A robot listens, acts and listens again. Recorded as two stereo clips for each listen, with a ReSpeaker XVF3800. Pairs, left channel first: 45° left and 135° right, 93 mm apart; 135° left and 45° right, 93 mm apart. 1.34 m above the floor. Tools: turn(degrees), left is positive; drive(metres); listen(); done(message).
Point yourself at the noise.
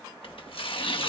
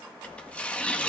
turn(degrees=60)
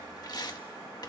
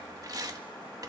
done("Found it: tearing paper, straight ahead.")